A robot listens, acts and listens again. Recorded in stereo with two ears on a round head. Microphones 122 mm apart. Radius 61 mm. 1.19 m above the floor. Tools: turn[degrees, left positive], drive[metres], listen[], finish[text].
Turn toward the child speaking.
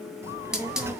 Thought: The child speaking: about 20° right or 160° right.
Action: turn[-20]
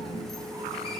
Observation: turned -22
Action: finish[Found it: a child speaking, straight ahead, 1 to 2 m away.]